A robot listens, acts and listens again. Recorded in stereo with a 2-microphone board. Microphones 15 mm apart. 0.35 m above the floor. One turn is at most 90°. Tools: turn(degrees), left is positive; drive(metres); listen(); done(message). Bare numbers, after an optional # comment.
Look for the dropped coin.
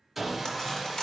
# The dropped coin: about 50° left or 130° left.
turn(50)
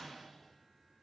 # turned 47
listen()
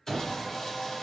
done("I heard a dropped coin, but can't make it out now. It was about straight ahead or 85° left.")